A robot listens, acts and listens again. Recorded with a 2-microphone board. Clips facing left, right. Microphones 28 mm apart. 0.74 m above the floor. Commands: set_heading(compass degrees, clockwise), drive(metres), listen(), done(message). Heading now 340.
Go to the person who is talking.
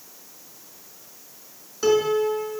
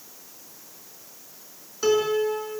listen()
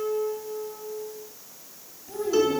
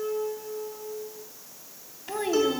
set_heading(45)
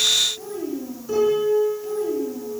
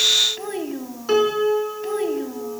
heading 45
set_heading(95)
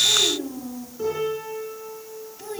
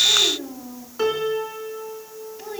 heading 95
set_heading(105)
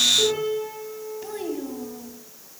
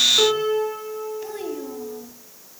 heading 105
drive(1.0)
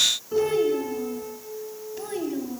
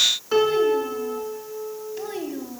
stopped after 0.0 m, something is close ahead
done("Blocked. The child speaking is further on, straight ahead.")